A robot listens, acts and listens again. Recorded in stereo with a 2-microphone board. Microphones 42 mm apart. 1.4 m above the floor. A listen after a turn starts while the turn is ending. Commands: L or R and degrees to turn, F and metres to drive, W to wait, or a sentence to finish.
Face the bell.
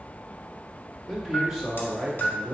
L50
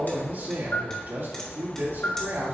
L70
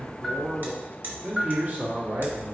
R10
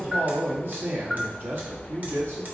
Found it: a bell, straight ahead, under 1 m away.